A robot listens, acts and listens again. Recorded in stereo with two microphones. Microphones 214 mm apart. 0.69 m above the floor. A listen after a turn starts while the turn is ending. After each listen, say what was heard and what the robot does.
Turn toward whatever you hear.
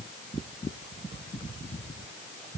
Keep listening.
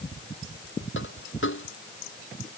The dropped coin: about 65° left or 115° left. Turn 65° left.
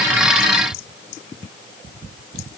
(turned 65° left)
Keep listening.
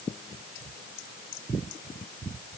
I heard a dropped coin, but can't make it out now. It was about straight ahead or 50° left.